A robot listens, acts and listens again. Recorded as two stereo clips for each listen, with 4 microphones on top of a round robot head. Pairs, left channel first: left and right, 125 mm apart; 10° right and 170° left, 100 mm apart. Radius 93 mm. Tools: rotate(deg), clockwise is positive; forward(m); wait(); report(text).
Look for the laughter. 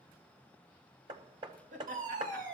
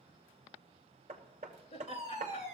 rotate(55)
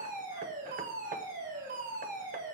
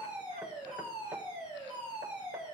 wait()
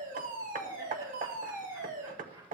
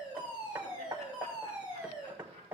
rotate(20)
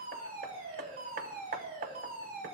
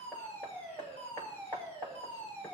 wait()
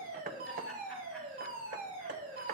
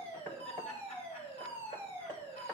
wait()
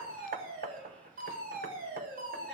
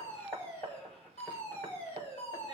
report("I heard laughter from this way, but can't make it out now.")